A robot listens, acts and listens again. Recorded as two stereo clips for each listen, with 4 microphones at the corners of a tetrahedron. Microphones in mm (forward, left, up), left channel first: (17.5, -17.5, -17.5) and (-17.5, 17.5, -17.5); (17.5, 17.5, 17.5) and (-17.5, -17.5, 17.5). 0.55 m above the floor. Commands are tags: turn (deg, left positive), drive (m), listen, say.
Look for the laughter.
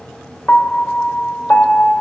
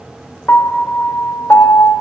<listen/>
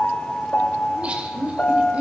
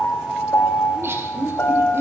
<turn deg="-165"/>
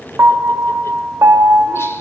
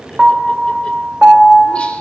<listen/>
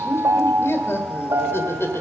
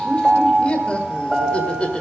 <turn deg="-20"/>
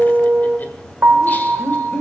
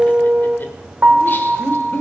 <say>Found it: laughter, straight ahead, 1 to 2 m away.</say>